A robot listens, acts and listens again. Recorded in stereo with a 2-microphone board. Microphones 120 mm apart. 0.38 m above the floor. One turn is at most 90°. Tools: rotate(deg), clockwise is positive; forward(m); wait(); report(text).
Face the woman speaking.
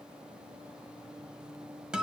wait()
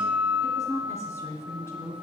rotate(-20)
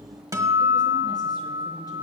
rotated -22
wait()
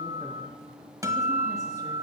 wait()
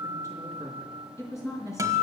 rotate(-25)
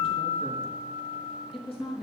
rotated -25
rotate(-90)
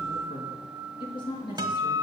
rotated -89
rotate(-40)
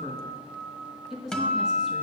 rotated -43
report("Facing the woman speaking.")